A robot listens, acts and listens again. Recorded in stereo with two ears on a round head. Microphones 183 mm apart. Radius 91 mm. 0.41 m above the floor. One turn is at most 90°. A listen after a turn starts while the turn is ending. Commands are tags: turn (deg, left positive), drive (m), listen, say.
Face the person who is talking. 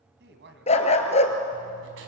<turn deg="-55"/>
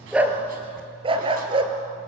<listen/>
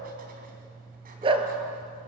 <listen/>
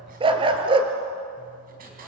<say>I heard a woman speaking, but can't make it out now. It was about straight ahead or 70° right.</say>